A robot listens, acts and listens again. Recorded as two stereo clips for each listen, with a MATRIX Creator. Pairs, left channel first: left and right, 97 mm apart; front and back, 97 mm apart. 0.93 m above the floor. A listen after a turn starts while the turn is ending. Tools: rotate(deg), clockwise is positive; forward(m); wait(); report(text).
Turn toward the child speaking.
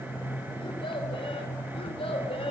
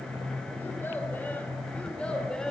rotate(-85)
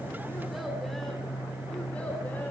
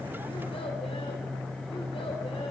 wait()
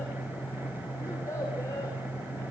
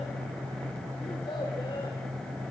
rotate(-35)
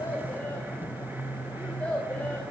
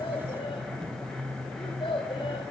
rotate(-15)
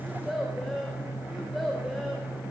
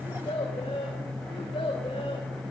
report("Found it: a child speaking, straight ahead, 2 to 4 m away.")